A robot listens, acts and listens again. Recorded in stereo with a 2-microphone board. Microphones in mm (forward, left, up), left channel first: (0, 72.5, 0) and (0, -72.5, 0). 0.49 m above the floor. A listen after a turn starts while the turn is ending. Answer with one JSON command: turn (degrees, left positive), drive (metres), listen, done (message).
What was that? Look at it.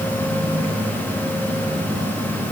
{"listen": true}
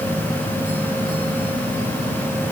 {"listen": true}
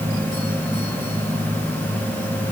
{"done": "I can't make out anything."}